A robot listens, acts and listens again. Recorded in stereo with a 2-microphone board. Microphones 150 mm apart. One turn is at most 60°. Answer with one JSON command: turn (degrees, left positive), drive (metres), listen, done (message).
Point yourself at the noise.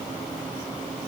{"listen": true}
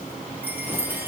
{"turn": -30}
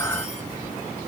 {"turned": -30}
{"listen": true}
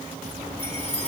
{"turn": -60}
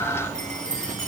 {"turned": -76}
{"turn": -60}
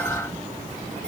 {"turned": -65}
{"listen": true}
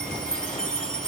{"done": "Facing the chime, 2 to 4 m away."}